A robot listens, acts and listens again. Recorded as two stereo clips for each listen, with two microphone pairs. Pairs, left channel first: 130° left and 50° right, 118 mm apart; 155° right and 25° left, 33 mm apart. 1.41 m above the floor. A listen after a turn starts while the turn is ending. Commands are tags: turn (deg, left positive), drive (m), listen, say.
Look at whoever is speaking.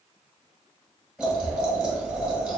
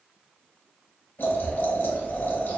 <listen/>
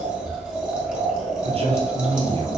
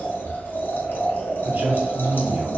<turn deg="-10"/>
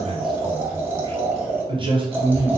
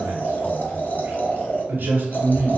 <say>Found it: a man speaking, straight ahead.</say>